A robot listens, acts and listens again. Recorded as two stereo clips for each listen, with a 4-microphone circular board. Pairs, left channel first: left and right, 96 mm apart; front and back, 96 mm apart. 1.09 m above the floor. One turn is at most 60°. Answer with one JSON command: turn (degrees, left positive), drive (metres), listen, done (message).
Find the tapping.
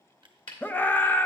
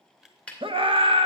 {"turn": 60}
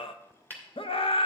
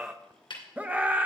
{"turn": 20}
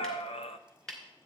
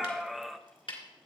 {"done": "Found it: tapping, straight ahead, 2 to 4 m away."}